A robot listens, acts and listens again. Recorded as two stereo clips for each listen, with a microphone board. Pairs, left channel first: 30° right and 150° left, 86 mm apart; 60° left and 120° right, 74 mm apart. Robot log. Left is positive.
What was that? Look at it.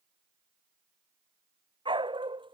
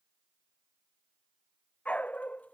note: The dog barking: 130° left.
cmd yaw +130
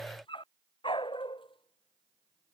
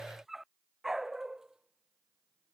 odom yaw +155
note: The dog barking is now 35° right.
cmd yaw -35
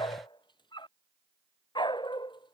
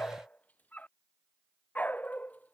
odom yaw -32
note: The dog barking is now 10° right.
cmd yaw -10
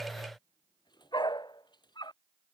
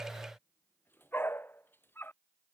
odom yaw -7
end: Facing the dog barking.